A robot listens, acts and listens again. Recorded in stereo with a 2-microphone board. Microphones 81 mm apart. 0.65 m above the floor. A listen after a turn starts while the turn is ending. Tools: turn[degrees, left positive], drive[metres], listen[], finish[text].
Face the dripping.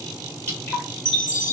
Thought: The dripping: about 30° left or 150° left.
Action: turn[30]
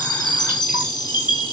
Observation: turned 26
Action: listen[]
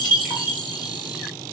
Action: listen[]
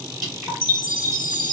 Action: finish[Facing the dripping, 2 to 4 m away.]